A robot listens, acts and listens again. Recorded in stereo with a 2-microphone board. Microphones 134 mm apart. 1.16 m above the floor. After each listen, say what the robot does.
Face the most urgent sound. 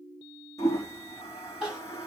Turn 30° right.
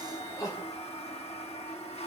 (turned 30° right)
Turn 25° left.
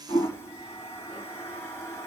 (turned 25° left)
Keep listening.
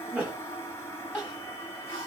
Turn 10° right.
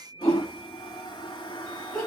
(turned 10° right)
Found it: crying, straight ahead, over 4 m away.